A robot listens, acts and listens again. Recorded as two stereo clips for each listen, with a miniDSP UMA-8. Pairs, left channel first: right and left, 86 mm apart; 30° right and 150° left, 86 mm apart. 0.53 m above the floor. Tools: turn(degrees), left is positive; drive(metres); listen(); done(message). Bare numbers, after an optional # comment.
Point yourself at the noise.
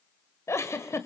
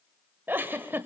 # The giggle: 145° right.
turn(-145)
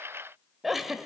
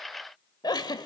done("Found it: a giggle, straight ahead.")